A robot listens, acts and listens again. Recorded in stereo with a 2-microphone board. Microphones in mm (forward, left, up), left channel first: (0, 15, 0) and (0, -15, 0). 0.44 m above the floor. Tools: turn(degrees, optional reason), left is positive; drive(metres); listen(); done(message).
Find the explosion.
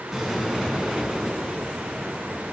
turn(degrees=-30)
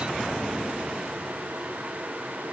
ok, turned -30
listen()
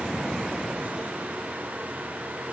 done("I heard an explosion, but can't make it out now. It was about 25° left or 145° right.")